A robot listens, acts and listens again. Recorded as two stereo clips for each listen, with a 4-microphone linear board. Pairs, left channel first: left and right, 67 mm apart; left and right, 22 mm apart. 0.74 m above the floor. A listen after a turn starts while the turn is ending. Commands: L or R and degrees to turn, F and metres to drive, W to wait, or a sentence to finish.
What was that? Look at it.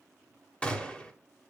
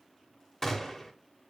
L20
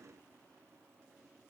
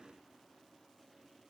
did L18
W
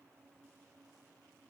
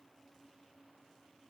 I heard a gunshot, but can't make it out now. It was about straight ahead or 145° left.